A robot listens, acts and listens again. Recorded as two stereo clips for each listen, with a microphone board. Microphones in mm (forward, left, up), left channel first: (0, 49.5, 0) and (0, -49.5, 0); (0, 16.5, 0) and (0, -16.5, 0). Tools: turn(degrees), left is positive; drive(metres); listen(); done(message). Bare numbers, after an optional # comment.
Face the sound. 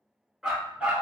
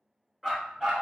turn(-30)
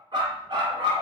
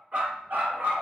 # So it is at 115° right.
turn(-115)
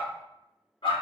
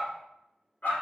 # The dog barking is now 65° left.
turn(65)
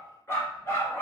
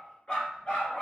# The dog barking is now 30° left.
turn(30)
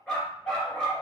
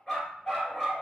# The dog barking is now 10° left.
turn(10)
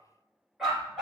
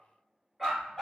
done("Facing the dog barking.")